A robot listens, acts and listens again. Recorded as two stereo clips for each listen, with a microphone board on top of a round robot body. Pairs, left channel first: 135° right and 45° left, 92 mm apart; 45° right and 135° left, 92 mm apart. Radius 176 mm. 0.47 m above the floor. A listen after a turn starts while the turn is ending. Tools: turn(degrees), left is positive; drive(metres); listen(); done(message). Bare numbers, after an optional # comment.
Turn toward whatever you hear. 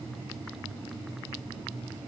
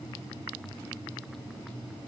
listen()
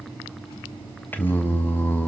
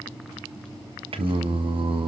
# The singing: 155° left.
turn(155)
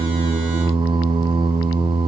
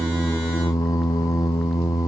# The singing is now 10° left.
turn(10)
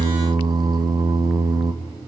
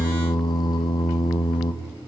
done("Facing the singing.")